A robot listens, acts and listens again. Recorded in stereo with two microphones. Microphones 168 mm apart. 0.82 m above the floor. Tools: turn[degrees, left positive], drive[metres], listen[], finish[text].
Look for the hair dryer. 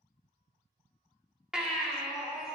Action: listen[]
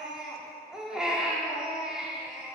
Action: listen[]
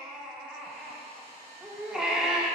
Thought: The hair dryer: about 35° right or 145° right.
Action: turn[-35]
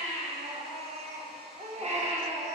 Action: listen[]
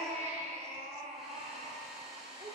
Action: finish[Found it: a hair dryer, straight ahead, 1 to 2 m away.]